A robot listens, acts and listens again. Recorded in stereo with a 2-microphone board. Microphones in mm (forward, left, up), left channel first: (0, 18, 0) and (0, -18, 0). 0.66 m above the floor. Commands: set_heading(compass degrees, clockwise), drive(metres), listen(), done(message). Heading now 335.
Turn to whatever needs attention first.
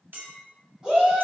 set_heading(355)
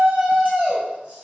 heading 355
set_heading(130)
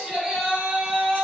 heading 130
set_heading(155)
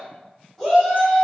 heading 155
done("Found it: a shout, straight ahead.")